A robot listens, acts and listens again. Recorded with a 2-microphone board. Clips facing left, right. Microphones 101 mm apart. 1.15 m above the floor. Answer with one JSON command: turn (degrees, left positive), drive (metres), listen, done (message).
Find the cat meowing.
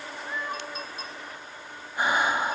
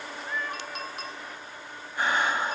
{"turn": 30}
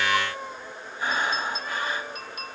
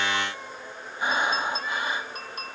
{"turn": 140}
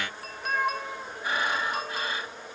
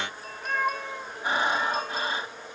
{"done": "Found it: a cat meowing, straight ahead."}